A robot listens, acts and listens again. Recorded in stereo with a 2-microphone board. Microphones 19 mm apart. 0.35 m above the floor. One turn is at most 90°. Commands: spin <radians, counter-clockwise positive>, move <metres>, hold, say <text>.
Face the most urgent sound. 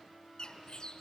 hold
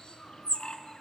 hold
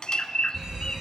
spin -0.44
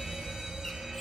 spin -1.57
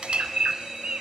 spin -0.61
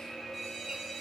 say Found it: a fire alarm, straight ahead, over 4 m away.